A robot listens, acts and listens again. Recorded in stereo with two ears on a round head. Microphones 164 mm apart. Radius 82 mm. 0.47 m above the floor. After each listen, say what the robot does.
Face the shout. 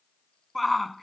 Turn 30° left.
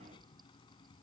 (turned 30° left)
Keep listening.
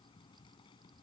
Keep listening.
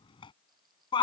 Turn 150° left.
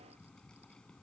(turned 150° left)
Keep listening.
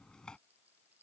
Keep listening.
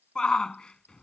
Facing the shout.